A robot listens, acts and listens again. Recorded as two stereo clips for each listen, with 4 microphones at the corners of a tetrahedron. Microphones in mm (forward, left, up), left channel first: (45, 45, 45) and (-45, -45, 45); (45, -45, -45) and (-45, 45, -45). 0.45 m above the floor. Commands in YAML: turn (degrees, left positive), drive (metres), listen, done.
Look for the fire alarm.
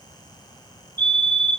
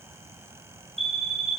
turn: 120
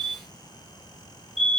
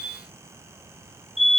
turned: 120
turn: 45
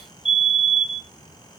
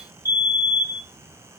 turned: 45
turn: 15
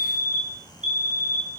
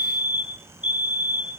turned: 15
done: "Found it: a fire alarm, straight ahead."